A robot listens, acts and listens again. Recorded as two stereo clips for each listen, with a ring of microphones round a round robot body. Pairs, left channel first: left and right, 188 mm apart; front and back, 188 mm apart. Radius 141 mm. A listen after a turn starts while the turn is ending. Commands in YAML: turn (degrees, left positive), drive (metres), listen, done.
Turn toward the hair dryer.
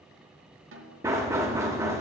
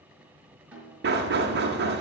listen: true
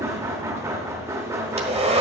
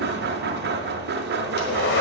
turn: -35
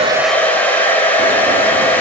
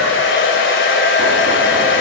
turn: 10
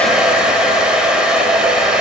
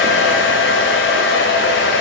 done: "Facing the hair dryer."